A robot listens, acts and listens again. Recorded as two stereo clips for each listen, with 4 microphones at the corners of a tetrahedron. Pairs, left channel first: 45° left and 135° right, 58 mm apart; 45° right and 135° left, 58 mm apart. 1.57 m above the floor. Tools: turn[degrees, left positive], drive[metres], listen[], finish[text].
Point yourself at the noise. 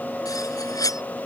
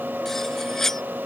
Thought: The cutlery clinking: 40° left.
Action: turn[40]
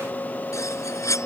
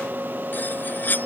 Thought: The cutlery clinking is now 15° left.
Action: turn[15]
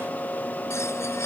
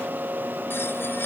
Action: finish[Found it: cutlery clinking, straight ahead.]